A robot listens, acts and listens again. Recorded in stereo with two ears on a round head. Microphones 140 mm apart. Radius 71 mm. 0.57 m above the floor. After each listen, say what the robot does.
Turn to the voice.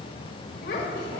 Turn 65° left.
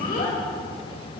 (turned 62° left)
Turn 50° left.
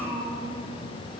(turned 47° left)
Found it: a child speaking, straight ahead.